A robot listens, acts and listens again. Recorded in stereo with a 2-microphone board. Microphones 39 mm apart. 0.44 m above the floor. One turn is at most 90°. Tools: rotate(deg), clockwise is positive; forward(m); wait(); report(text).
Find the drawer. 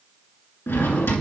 rotate(-75)
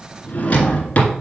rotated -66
rotate(-40)
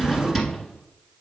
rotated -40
report("Facing the drawer.")